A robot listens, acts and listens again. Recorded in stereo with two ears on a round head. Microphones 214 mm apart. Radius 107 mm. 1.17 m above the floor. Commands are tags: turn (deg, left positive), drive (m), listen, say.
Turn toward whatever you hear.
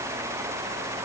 <listen/>
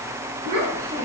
<turn deg="-70"/>
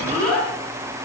<say>Facing the child speaking, 2 to 4 m away.</say>